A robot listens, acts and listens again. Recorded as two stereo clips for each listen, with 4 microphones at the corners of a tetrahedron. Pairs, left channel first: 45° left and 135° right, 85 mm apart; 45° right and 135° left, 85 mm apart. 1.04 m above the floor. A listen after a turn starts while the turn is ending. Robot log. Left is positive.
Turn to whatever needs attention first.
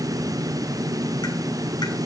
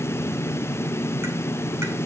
cmd idle
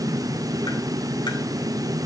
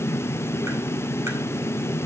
cmd idle
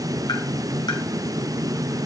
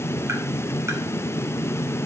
end: I can't make out anything urgent to turn to.